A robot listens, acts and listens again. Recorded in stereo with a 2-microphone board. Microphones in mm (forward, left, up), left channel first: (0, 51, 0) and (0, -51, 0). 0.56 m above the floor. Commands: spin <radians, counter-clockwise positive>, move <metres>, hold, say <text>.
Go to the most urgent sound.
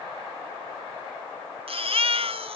spin -1.13
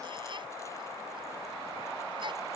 hold
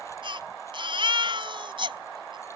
spin -0.87
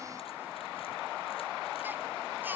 hold
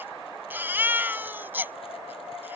spin -0.35
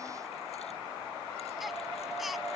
hold
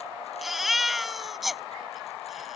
move 1.0
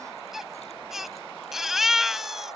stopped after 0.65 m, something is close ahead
say Blocked. The baby crying is further on, straight ahead.